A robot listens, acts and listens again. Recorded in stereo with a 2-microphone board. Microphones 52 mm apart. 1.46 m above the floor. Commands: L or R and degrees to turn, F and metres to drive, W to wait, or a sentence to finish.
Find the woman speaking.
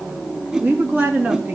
R25
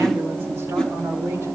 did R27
W
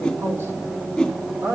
R135
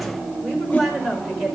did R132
Found it: a woman speaking, straight ahead.